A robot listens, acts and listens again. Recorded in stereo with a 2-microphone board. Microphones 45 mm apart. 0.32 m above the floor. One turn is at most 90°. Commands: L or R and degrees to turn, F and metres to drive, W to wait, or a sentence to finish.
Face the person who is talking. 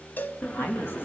L50
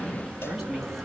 Found it: a woman speaking, straight ahead, 2 to 4 m away.